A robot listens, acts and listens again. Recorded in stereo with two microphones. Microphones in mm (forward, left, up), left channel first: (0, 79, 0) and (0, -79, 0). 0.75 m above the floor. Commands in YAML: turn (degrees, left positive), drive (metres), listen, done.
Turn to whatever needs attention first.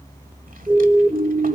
turn: -20
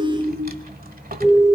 done: "Facing the siren, 2 to 4 m away."